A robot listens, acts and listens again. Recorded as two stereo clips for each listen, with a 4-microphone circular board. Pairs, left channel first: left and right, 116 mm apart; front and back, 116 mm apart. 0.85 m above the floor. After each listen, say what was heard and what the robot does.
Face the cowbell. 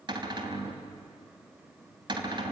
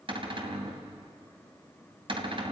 Keep listening.
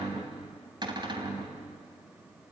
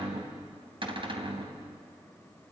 Keep listening.
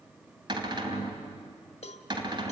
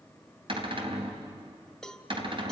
The cowbell: 85° left. Turn 85° left.
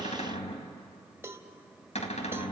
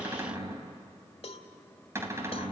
The cowbell is now 25° right. Turn 25° right.
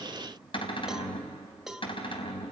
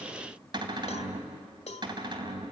Facing the cowbell.